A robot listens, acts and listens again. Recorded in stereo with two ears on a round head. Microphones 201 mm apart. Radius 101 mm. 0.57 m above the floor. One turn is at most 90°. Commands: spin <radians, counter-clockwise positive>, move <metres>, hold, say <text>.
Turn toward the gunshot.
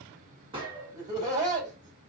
spin -0.44
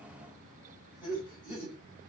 hold
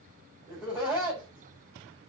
say I heard a gunshot, but can't make it out now. It was about straight ahead or 130° right.